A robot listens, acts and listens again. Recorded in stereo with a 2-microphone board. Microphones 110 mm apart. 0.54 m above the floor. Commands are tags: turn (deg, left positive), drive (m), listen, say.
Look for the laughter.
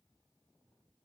<listen/>
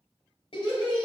<turn deg="50"/>
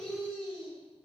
<say>Found it: laughter, straight ahead, 2 to 4 m away.</say>